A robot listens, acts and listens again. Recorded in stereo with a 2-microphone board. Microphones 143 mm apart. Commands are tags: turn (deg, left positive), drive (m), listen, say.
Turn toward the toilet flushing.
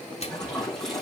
<turn deg="30"/>
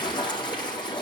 <turn deg="145"/>
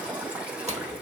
<turn deg="-10"/>
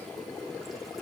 <listen/>
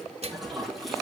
<say>Found it: a toilet flushing, straight ahead.</say>